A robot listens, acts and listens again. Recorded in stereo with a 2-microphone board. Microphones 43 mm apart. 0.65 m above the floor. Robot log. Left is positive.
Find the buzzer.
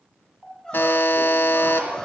note: The buzzer: about 65° left or 115° left.
cmd yaw +65
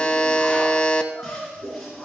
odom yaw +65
note: So it is at 25° left.
cmd yaw +25
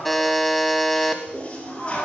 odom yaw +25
end: Facing the buzzer.